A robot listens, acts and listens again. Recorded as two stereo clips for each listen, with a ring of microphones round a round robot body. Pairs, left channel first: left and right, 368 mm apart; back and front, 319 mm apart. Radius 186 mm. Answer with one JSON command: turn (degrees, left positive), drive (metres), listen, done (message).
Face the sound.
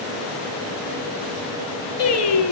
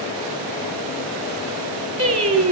{"turn": 40}
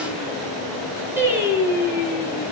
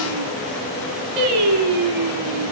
{"turn": -10}
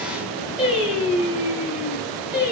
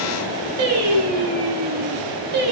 {"done": "Found it: singing, straight ahead."}